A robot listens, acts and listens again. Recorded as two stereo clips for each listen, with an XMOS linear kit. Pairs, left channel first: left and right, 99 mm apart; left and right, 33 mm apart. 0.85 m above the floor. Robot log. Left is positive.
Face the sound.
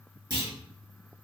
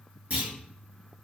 note: The clunk: about 45° right or 135° right.
cmd yaw -45
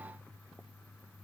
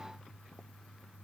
cmd idle
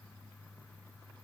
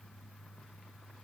end: I heard a clunk, but can't make it out now. It was about straight ahead or 90° right.